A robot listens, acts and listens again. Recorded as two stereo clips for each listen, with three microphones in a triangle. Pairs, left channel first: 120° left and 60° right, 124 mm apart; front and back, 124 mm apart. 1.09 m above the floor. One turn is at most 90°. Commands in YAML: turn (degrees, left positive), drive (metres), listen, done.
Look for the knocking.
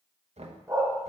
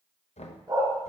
turn: -30
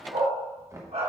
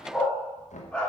turn: 10
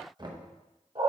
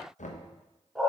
done: "Facing the knocking, under 1 m away."